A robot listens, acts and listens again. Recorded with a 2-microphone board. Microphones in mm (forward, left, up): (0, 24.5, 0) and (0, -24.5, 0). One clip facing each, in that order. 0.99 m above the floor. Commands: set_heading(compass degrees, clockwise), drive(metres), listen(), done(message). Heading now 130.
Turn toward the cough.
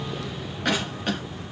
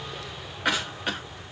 set_heading(160)
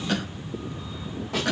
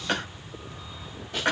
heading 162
set_heading(302)
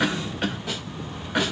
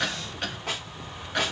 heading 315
set_heading(305)
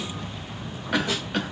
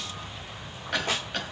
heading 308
done("Facing the cough, 1 to 2 m away.")